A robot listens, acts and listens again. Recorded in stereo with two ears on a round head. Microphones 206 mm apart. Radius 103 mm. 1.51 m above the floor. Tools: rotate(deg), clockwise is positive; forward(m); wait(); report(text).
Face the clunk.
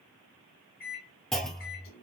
rotate(-30)
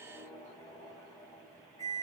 wait()
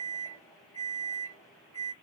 report("I heard a clunk, but can't make it out now. It was about 30° right or 150° left.")